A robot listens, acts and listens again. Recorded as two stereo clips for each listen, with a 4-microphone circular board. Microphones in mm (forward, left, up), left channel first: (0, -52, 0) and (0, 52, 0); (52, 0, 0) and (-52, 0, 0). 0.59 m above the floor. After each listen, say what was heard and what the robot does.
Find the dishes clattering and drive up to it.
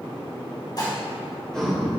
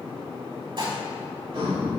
The dishes clattering: 140° right. Turn 140° right.
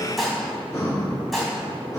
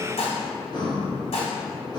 Drive 1.0 m forward.
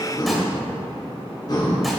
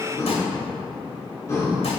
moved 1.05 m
Keep listening.
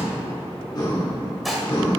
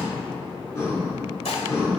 Drive 1.0 m forward.
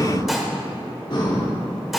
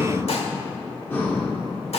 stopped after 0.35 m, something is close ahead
Keep listening.
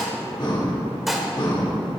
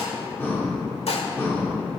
I am next to the dishes clattering.